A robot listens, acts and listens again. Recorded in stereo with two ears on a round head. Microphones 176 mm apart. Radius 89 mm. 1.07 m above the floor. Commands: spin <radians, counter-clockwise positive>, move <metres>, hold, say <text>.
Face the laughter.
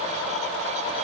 hold
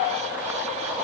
hold
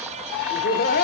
spin 0.87
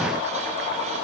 hold
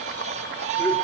hold
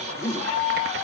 spin 0.26
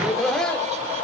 say Facing the laughter.